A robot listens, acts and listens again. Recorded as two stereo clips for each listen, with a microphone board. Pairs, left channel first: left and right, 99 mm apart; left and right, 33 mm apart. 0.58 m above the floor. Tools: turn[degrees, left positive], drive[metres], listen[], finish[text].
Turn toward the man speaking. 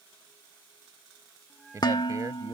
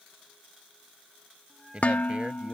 Thought: The man speaking: about 40° right or 140° right.
Action: turn[-40]
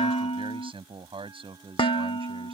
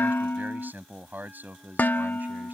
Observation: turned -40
Thought: So it is at 105° right.
Action: turn[-105]
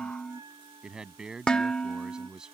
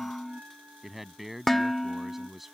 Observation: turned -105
Action: finish[Facing the man speaking.]